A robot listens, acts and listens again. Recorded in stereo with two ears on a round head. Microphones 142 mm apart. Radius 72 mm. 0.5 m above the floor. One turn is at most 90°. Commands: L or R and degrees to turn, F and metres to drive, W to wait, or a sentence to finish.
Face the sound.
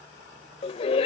L40
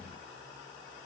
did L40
W
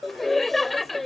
Facing the laughter.